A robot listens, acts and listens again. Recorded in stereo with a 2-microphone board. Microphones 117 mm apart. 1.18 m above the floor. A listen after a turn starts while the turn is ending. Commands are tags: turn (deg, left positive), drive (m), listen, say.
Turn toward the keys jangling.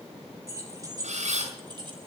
<turn deg="-40"/>
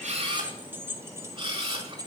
<turn deg="-35"/>
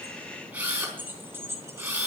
<turn deg="-25"/>
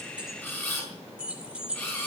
<turn deg="-10"/>
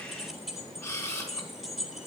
<say>Facing the keys jangling, 2 to 4 m away.</say>